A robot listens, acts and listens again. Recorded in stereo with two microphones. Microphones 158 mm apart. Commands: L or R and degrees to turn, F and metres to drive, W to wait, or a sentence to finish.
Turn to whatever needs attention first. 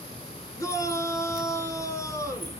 L20
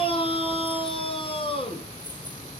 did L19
L145
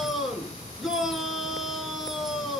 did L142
Found it: a shout, straight ahead.